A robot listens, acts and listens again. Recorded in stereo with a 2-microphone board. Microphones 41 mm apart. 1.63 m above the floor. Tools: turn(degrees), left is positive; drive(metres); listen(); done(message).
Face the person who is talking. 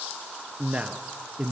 turn(degrees=-30)
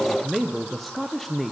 done("Facing the man speaking.")